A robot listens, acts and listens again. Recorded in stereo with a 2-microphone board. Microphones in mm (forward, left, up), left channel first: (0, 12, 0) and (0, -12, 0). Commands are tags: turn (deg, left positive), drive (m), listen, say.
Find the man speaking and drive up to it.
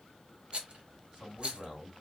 <turn deg="-20"/>
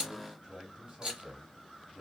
<turn deg="-145"/>
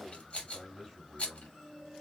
<drive m="1.0"/>
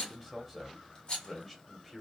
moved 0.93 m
<drive m="1.0"/>
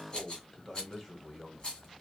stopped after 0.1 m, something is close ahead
<turn deg="10"/>
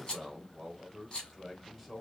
<say>I am next to the man speaking.</say>